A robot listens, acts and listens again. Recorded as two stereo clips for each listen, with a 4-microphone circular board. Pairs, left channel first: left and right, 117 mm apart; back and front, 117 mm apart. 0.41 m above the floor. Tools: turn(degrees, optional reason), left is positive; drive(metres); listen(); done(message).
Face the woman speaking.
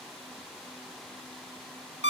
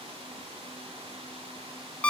listen()
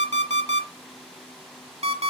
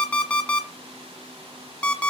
listen()
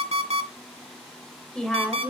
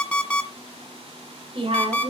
done("Found it: a woman speaking, straight ahead, 1 to 2 m away.")